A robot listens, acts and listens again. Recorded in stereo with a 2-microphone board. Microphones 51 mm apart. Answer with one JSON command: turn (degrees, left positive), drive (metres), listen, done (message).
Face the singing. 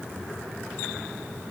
{"listen": true}
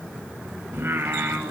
{"turn": -50}
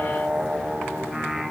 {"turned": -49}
{"done": "Facing the singing, 1 to 2 m away."}